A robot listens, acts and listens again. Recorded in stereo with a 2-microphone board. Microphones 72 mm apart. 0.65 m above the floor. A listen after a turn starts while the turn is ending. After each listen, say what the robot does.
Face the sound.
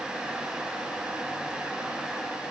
Keep listening.
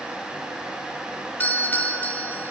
Turn 25° left.
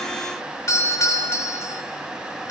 Turn 130° left.
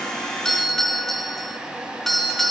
Facing the doorbell, 2 to 4 m away.